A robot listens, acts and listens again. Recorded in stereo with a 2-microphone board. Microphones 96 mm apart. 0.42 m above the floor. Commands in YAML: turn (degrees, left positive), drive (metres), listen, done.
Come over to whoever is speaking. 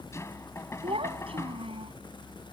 turn: -90
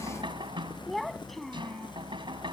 drive: 1.0
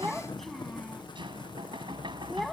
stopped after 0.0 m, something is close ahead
done: "Something is in my way. I am facing the child speaking but have not reached it."